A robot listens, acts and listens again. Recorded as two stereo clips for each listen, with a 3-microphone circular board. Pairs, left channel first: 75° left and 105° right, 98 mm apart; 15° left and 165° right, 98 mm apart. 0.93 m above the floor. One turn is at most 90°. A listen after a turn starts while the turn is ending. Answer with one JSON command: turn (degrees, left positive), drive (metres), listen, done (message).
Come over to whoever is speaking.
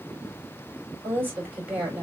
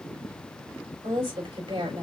{"turn": -90}
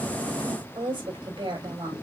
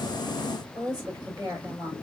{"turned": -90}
{"turn": -90}
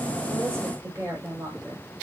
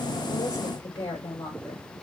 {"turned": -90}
{"turn": -40}
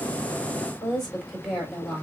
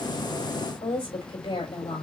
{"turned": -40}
{"turn": -15}
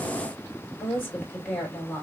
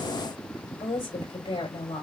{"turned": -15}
{"drive": 1.0}
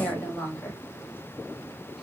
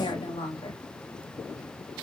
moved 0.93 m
{"drive": 1.0}
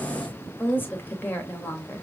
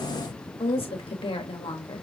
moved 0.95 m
{"drive": 1.0}
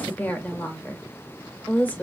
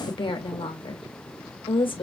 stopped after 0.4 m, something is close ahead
{"done": "Arrived at the woman speaking, straight ahead."}